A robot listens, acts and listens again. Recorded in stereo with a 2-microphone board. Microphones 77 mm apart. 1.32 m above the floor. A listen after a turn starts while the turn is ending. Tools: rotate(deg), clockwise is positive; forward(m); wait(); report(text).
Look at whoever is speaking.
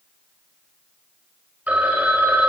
wait()
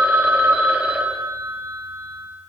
wait()
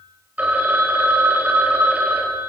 report("I can't make out anyone speaking, only a phone ringing.")